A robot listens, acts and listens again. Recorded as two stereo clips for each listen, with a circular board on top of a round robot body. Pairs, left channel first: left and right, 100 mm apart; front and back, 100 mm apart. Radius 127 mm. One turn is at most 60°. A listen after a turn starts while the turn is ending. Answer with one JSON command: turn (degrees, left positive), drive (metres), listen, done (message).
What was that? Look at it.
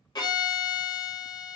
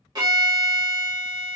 {"turn": 60}
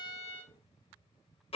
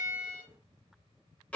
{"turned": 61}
{"turn": 60}
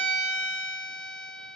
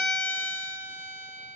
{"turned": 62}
{"turn": 15}
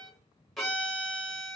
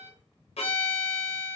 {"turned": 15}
{"done": "Found it: a violin, straight ahead."}